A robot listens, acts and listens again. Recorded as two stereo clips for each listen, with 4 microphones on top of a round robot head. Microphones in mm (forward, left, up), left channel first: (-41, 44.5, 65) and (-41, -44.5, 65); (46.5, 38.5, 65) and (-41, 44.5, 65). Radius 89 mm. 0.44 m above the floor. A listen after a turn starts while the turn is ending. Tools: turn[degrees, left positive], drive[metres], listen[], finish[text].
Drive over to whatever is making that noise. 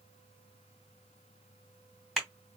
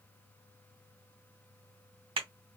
Thought: The clap: straight behind.
Action: turn[180]
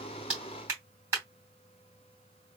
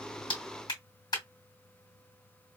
Thought: The clap is now 30° right.
Action: turn[-30]
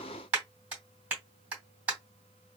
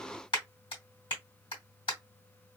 Thought: The clap is now 15° right.
Action: turn[-15]
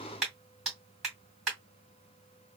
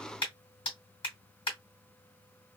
Action: drive[1.0]
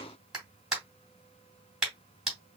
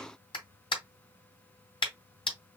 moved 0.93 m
Action: drive[1.0]
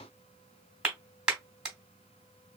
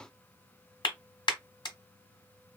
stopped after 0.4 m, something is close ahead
Thought: The clap is now 10° right.
Action: turn[-10]
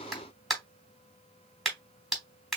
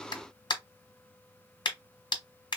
Action: finish[I am next to the clap.]